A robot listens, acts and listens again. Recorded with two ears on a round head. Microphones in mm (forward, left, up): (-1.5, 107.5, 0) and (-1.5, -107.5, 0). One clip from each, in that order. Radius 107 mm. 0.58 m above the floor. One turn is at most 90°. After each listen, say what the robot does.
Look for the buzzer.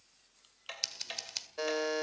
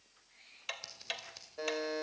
Turn 40° left.
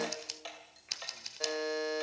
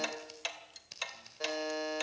Found it: a buzzer, straight ahead, 2 to 4 m away.